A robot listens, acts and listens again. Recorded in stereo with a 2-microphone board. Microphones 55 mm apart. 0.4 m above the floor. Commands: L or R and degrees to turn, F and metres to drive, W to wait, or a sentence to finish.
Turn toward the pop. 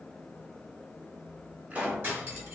R25
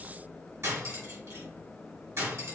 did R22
W
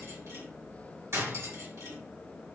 I heard a pop, but can't make it out now. It was about straight ahead or 135° right.